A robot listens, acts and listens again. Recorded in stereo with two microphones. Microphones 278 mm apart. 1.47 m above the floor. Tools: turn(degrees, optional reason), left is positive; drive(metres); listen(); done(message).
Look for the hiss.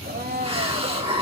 turn(degrees=-20, reason="The hiss: about 20° right or 160° right.")
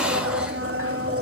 listen()
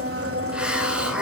done("Facing the hiss.")